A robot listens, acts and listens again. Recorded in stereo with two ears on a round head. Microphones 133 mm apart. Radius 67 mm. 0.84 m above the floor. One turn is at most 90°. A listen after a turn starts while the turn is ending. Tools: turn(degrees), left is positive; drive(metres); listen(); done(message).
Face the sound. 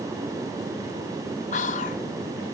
turn(degrees=50)
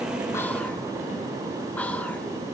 listen()
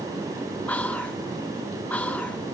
turn(degrees=10)
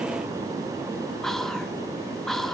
done("Facing the whispering.")